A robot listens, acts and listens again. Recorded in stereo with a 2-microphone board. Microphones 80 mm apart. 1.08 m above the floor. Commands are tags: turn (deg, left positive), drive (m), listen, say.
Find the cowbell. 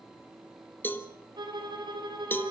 <turn deg="25"/>
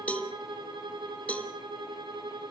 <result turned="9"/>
<turn deg="15"/>
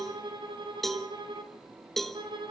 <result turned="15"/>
<say>Facing the cowbell, 1 to 2 m away.</say>